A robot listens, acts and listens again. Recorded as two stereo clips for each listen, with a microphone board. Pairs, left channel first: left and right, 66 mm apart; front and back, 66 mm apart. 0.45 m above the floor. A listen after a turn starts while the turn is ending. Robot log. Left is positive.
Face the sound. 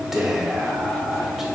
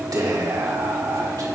note: The whispering: 175° right.
cmd yaw -175
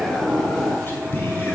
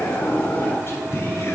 note: The whispering is now 40° left.
cmd yaw +40
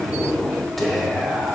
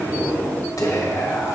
end: Found it: whispering, straight ahead.